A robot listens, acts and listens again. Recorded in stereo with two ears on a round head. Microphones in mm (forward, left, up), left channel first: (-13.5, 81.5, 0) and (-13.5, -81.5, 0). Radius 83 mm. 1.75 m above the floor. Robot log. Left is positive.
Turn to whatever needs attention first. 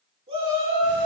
note: The shout: about 35° right or 145° right.
cmd yaw -35
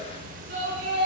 note: So it is at 110° right.
cmd yaw -110
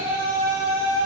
note: The shout is now 35° right.
cmd yaw -35
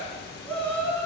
note: The shout is now 10° left.
cmd yaw +10
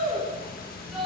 end: Facing the shout.